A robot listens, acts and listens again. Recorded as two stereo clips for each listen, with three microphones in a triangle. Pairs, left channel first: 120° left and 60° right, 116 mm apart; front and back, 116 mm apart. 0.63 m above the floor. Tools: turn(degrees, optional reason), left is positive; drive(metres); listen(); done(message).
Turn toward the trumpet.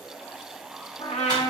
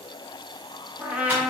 turn(degrees=105, reason="The trumpet: 105° left.")
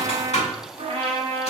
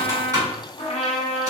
turn(degrees=-25, reason="The trumpet is now 25° right.")
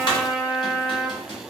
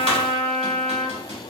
turn(degrees=15, reason="The trumpet is now 15° left.")
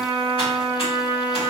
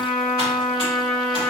done("Found it: a trumpet, straight ahead, under 1 m away.")